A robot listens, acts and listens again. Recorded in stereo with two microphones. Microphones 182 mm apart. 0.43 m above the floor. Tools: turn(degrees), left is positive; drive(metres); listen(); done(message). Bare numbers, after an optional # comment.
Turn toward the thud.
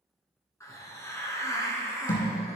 # The thud: about 45° left or 135° left.
turn(45)
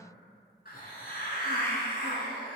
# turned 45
listen()
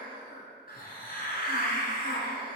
done("I heard a thud, but can't make it out now. It was about straight ahead or 90° left.")